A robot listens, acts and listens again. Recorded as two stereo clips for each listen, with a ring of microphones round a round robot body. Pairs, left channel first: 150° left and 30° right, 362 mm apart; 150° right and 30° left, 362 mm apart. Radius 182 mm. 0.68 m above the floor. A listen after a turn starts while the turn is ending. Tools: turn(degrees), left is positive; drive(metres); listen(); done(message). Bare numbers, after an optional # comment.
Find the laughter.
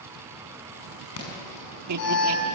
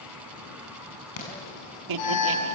# The laughter: 10° left.
turn(10)
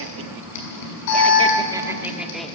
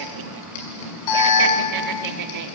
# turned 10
# The laughter is now 60° left.
turn(60)
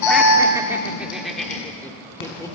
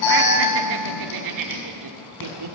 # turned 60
# The laughter is now 70° left.
turn(70)
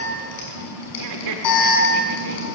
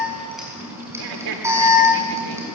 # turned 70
done("Facing the laughter.")